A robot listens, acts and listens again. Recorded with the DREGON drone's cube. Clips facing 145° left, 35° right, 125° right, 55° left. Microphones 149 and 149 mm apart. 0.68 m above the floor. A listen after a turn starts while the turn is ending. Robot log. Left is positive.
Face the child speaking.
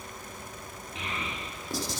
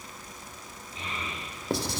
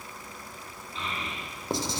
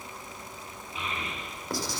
note: The child speaking: 135° left.
cmd yaw +135
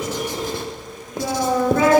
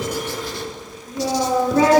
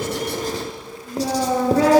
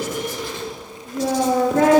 note: The child speaking is now 30° left.
cmd yaw +30
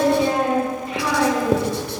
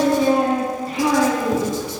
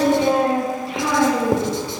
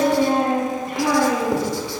note: The child speaking is now 20° left.
cmd yaw +20
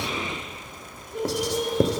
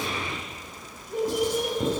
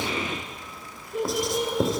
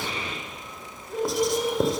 end: Found it: a child speaking, straight ahead, over 4 m away.